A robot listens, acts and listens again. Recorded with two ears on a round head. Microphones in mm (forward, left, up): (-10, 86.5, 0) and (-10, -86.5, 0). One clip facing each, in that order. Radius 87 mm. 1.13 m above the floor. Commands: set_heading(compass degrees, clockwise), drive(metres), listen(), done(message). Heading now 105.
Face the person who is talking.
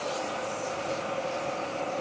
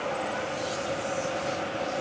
listen()
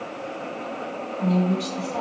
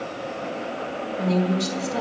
set_heading(135)
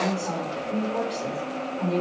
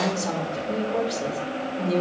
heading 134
set_heading(254)
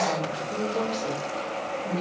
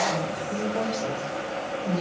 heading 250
done("Facing the woman speaking.")